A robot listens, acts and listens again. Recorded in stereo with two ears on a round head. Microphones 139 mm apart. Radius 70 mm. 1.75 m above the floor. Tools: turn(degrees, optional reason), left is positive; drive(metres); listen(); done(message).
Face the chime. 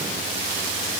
listen()
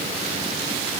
listen()
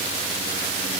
done("I can't make out a chime to turn to.")